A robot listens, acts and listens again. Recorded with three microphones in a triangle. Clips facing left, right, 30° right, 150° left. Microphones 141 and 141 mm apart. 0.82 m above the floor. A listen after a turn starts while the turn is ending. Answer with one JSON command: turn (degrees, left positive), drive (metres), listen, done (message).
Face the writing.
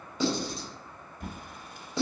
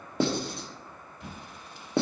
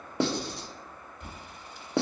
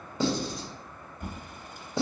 {"turn": -55}
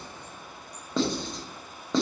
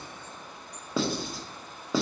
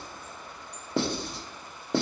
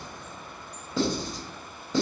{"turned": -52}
{"done": "Facing the writing."}